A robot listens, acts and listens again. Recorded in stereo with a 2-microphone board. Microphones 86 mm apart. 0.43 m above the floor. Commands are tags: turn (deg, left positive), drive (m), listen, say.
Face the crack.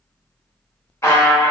<listen/>
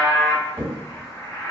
<turn deg="-30"/>
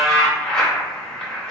<listen/>
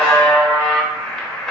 <say>I heard a crack, but can't make it out now. It was about straight ahead or 120° right.</say>